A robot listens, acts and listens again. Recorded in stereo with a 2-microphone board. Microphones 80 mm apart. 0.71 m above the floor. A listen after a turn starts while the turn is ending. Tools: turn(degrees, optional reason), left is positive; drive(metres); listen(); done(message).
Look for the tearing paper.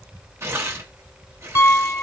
turn(degrees=-35, reason="The tearing paper: about 35° right or 145° right.")
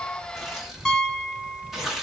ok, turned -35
done("Facing the tearing paper.")